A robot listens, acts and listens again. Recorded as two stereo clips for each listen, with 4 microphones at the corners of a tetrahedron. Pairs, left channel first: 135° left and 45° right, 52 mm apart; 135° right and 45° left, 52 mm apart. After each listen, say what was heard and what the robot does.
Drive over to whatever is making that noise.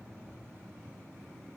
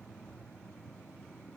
Keep listening.
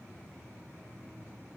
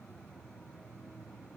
Keep listening.
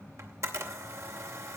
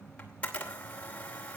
The camera shutter: 70° right. Turn 70° right.
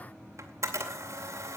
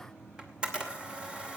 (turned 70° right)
The camera shutter is now 25° right. Turn 25° right.
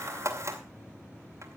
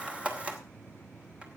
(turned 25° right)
The camera shutter is now 20° right. Turn 20° right.
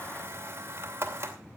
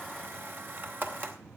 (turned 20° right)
Drive 1.0 m forward.
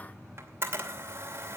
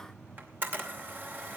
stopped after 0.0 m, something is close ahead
Blocked. The camera shutter is further on, straight ahead.